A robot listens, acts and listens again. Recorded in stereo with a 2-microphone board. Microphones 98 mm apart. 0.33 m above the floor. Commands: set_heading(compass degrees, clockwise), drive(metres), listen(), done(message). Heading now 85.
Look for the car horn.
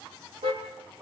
set_heading(175)
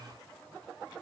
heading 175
listen()
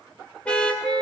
set_heading(165)
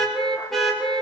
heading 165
done("Facing the car horn, over 4 m away.")